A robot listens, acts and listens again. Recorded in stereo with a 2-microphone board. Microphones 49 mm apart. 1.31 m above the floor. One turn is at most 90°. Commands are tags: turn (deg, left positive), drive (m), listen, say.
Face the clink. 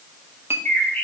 <turn deg="-60"/>
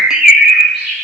<listen/>
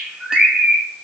<listen/>
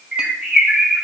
<say>I heard a clink, but can't make it out now. It was about straight ahead or 60° right.</say>